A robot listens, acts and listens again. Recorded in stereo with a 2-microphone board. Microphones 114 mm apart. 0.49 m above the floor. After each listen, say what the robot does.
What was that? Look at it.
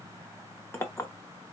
Turn 20° left.
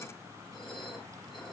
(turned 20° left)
Keep listening.
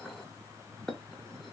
Facing the clink.